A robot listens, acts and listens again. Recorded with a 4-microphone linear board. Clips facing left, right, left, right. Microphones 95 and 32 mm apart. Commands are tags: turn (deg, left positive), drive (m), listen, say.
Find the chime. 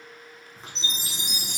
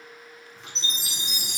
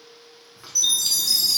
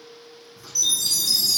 <turn deg="30"/>
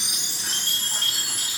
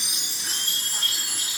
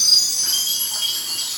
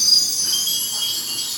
<turn deg="-10"/>
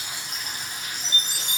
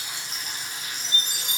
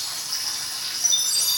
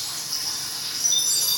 <say>Facing the chime.</say>